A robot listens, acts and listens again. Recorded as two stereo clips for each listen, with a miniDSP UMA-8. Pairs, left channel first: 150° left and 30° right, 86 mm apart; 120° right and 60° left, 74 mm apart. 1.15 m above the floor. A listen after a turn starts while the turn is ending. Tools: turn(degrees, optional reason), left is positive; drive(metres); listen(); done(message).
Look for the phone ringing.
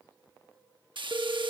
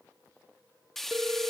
turn(degrees=10, reason="The phone ringing: 10° left.")
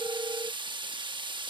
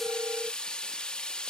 done("Facing the phone ringing.")